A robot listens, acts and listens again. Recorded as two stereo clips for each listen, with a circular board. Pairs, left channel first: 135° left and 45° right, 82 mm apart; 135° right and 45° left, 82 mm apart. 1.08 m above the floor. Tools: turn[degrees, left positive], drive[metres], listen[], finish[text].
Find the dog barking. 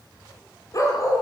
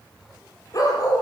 Thought: The dog barking: 175° right.
Action: turn[-175]
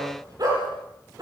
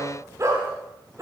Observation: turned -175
Action: finish[Found it: a dog barking, straight ahead.]